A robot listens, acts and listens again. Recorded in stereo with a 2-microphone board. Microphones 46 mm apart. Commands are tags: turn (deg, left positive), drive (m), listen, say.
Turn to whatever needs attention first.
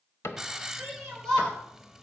<turn deg="30"/>
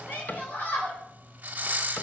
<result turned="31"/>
<turn deg="135"/>
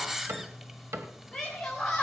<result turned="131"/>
<say>Facing the shout, 2 to 4 m away.</say>